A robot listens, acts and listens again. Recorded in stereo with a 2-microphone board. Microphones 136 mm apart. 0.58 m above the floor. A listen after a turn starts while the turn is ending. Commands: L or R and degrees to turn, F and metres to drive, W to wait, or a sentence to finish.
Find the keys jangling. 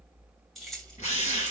L30
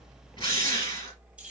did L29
R30
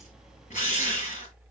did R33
W
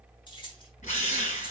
L35
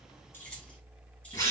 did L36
W
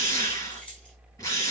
L10
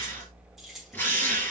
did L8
Found it: keys jangling, straight ahead.